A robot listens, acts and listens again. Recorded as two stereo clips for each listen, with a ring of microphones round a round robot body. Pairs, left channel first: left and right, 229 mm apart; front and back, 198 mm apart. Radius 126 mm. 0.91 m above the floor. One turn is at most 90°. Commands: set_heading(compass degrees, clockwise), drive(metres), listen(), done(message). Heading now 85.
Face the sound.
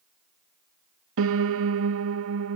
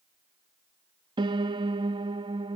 set_heading(175)
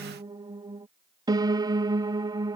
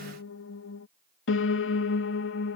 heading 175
set_heading(190)
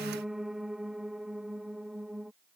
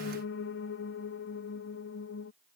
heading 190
done("Facing the piano.")